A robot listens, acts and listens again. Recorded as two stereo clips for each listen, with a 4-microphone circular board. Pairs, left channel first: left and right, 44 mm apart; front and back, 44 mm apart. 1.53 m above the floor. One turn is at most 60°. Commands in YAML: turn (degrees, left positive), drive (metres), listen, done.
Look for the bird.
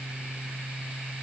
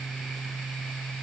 listen: true
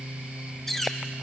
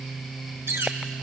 turn: 60
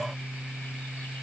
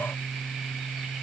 turn: 60
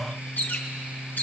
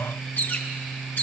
turn: 45
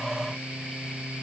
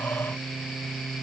listen: true
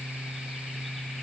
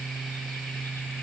listen: true
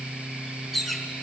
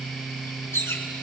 done: "Found it: a bird, straight ahead."